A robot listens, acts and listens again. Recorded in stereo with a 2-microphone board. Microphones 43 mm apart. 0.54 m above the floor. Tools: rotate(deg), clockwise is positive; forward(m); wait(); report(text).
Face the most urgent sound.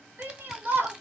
rotate(50)
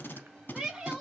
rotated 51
rotate(10)
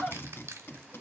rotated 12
report("Found it: a shout, straight ahead.")